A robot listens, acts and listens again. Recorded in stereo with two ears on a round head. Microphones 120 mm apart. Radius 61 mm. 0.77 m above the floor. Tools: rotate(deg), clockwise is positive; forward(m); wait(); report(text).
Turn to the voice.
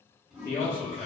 rotate(-15)
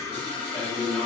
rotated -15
report("Found it: a man speaking, straight ahead, 1 to 2 m away.")